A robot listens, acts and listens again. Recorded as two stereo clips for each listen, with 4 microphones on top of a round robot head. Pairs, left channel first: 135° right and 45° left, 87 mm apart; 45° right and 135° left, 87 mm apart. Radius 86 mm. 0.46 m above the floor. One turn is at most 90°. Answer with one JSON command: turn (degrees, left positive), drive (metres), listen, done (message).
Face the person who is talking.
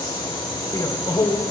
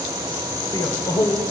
{"turn": -85}
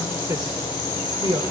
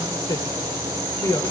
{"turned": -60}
{"turn": 10}
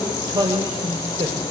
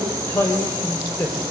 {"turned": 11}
{"turn": 20}
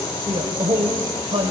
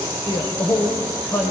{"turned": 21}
{"turn": 20}
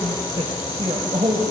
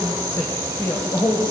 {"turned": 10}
{"turn": 10}
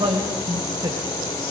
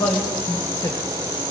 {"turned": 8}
{"done": "Facing the man speaking, 2 to 4 m away."}